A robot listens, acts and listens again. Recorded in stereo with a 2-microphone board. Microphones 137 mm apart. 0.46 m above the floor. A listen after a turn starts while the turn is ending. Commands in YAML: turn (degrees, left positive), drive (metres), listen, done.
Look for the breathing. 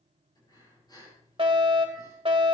turn: 35
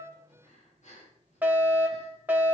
turn: 110
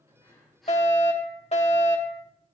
done: "Found it: breathing, straight ahead."